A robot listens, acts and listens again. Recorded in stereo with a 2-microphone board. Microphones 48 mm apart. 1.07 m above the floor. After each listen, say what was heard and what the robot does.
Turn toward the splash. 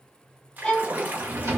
The splash: about 40° right or 140° right. Turn 40° right.
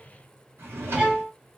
Keep listening.
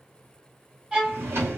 I heard a splash, but can't make it out now. It was about straight ahead or 100° right.